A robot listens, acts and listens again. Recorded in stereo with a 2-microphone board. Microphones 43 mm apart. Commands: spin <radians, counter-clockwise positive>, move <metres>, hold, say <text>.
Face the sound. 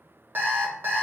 spin -0.87
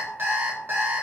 spin -1.31
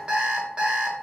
spin -0.44
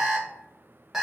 say Found it: an alarm clock, straight ahead, under 1 m away.